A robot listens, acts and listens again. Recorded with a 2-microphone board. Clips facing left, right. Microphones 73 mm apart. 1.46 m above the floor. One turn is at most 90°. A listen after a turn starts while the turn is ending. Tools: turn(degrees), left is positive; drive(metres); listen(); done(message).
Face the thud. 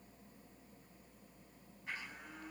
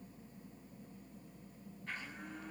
listen()
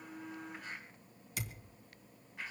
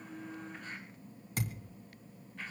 turn(degrees=-35)
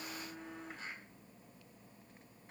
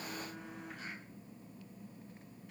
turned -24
listen()
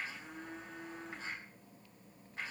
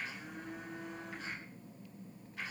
done("I heard a thud, but can't make it out now. It was about 10° right or 120° right.")